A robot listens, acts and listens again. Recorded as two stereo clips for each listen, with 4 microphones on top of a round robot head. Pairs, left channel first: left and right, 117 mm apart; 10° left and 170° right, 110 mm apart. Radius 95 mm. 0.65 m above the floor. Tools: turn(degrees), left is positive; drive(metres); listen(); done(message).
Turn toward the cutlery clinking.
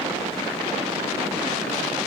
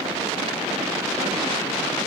listen()
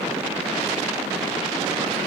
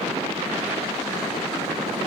listen()
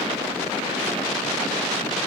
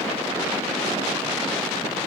done("I can't make out cutlery clinking to turn to.")